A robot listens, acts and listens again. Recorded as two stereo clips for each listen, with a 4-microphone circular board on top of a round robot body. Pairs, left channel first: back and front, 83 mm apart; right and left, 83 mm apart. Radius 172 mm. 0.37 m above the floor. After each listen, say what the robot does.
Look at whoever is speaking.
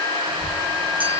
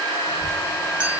Turn 120° left.
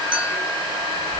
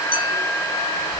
Turn 35° left.
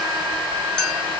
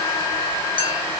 Keep listening.
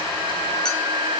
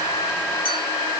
Keep listening.
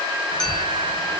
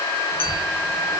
Turn 10° left.
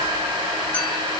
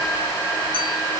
Keep listening.
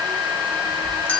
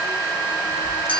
Found it: a child speaking, straight ahead, 2 to 4 m away.